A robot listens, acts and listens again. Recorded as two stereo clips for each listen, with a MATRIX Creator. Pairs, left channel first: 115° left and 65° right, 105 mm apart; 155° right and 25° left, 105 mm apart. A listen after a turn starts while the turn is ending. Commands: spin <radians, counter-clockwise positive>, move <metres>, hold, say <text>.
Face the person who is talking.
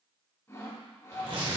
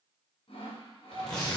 hold
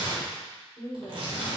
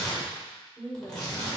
spin 2.62
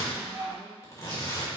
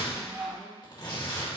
hold
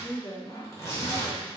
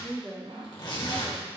spin 1.75
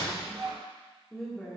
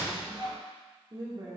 spin 0.52
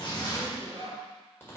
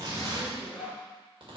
hold
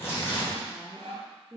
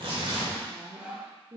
say Found it: a woman speaking, straight ahead.